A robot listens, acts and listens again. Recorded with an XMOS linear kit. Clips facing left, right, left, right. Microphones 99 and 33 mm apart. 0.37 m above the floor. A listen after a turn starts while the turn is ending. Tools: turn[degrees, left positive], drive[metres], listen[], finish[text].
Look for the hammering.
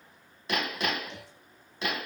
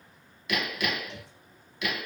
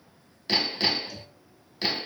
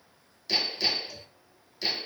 Thought: The hammering: about 35° left or 145° left.
Action: turn[35]
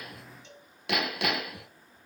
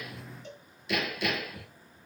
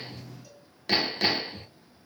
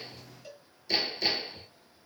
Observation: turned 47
Thought: So it is at 100° left.
Action: turn[100]
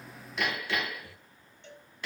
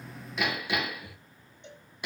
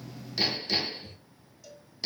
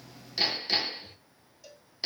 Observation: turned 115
Thought: The hammering is now 15° right.
Action: turn[-15]
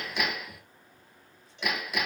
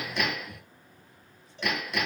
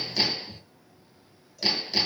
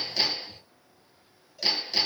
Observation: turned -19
Action: finish[Found it: hammering, straight ahead, 2 to 4 m away.]